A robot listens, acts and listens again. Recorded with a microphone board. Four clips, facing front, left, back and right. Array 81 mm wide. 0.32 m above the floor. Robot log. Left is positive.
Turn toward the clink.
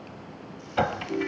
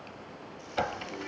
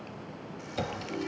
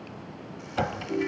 end: Found it: a clink, straight ahead, under 1 m away.